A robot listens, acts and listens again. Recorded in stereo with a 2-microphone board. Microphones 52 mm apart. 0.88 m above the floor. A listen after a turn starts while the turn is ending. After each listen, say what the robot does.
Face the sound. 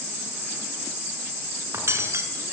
Turn 55° right.
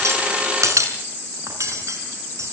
Turn 70° right.
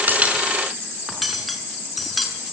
Facing the cutlery clinking, over 4 m away.